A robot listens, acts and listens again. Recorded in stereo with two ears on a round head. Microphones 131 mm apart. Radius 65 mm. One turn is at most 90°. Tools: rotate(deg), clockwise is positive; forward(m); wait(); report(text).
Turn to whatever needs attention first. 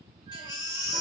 rotate(-30)
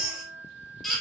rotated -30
report("Facing the baby crying.")